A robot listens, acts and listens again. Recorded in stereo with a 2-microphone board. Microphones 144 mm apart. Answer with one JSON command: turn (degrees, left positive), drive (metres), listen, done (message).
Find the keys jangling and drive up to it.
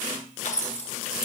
{"turn": 60}
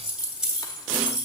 {"drive": 1.0}
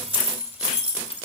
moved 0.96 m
{"turn": -10}
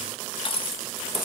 {"drive": 1.0}
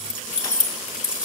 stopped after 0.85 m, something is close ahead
{"done": "Arrived at the keys jangling, straight ahead."}